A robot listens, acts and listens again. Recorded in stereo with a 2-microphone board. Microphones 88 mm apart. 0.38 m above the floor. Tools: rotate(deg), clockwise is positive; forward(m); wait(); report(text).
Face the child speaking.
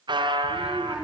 rotate(30)
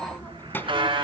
rotate(-25)
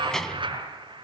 report("Facing the child speaking.")